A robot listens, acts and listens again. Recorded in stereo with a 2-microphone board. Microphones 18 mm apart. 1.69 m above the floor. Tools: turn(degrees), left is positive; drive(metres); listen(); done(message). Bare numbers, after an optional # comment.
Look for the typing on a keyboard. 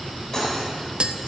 listen()
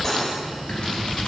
turn(90)
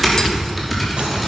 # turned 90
done("Found it: typing on a keyboard, straight ahead.")